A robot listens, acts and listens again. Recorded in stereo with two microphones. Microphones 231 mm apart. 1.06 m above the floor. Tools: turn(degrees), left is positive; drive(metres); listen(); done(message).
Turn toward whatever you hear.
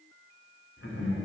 turn(degrees=70)
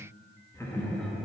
done("Facing the laughter, 1 to 2 m away.")